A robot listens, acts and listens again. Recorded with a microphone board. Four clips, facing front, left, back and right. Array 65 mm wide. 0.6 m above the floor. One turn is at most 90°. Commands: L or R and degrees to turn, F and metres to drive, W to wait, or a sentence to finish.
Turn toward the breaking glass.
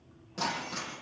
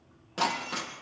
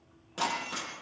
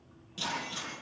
L90
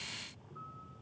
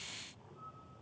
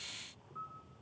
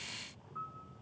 L15
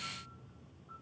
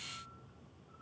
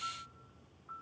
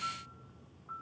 Facing where the breaking glass came from. I can't hear it now.